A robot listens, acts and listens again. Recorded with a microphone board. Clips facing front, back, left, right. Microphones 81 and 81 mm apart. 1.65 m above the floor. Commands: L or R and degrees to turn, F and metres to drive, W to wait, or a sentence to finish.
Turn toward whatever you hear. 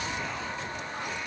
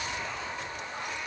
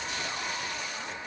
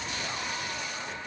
W
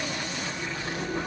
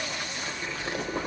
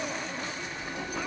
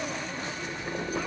R135
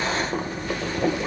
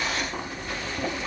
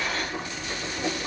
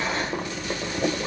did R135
R50
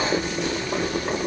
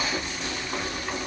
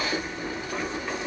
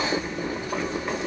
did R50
R20
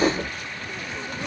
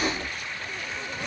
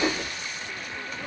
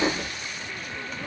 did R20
Found it: boiling, straight ahead, 1 to 2 m away.